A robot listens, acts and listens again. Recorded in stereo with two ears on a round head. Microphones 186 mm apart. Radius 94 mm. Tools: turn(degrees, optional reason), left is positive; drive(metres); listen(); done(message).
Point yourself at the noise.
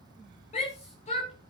turn(degrees=35, reason="The shout: about 35° left or 145° left.")
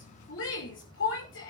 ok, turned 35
turn(degrees=110, reason="So it is at 110° left.")
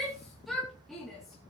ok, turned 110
done("Facing the shout.")